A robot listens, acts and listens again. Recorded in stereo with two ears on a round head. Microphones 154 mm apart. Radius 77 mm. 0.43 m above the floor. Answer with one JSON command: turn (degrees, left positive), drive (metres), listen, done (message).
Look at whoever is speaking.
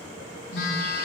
{"listen": true}
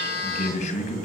{"turn": 45}
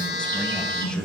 {"listen": true}
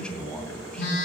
{"done": "Facing the man speaking."}